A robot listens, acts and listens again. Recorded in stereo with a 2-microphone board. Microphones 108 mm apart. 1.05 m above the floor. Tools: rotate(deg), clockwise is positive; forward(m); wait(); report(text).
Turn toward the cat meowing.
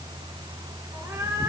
rotate(30)
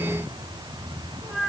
report("Facing the cat meowing, over 4 m away.")